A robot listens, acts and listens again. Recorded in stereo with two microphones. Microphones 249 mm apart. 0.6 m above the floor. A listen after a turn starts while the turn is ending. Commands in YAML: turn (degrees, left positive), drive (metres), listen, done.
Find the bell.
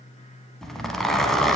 listen: true
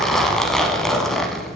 listen: true
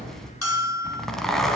turn: 75
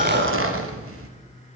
listen: true
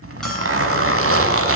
listen: true
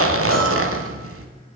done: "I heard a bell, but can't make it out now. It was about straight ahead or 30° left."